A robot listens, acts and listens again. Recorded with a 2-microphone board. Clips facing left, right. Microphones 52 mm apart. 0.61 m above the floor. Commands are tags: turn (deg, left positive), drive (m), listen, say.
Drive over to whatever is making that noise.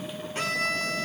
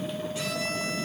<turn deg="50"/>
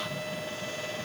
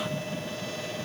<listen/>
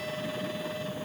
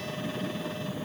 <listen/>
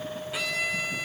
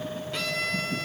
<turn deg="10"/>
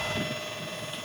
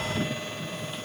<listen/>
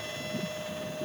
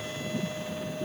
<listen/>
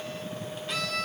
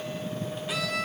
<drive m="1.0"/>
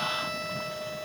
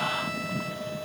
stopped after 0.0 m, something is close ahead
<listen/>
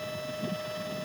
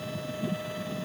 <listen/>
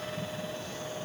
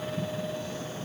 <say>Facing where the violin came from. I can't hear it now. I did not reach it.</say>